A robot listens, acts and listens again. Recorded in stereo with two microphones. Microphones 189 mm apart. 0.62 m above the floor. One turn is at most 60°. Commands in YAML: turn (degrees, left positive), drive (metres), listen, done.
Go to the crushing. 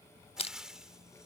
turn: 30
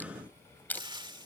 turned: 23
turn: 10
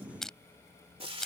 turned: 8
drive: 1.0
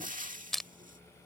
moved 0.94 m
drive: 1.0
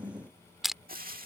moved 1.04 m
drive: 1.0
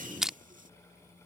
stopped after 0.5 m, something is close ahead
done: "Arrived at the crushing, straight ahead."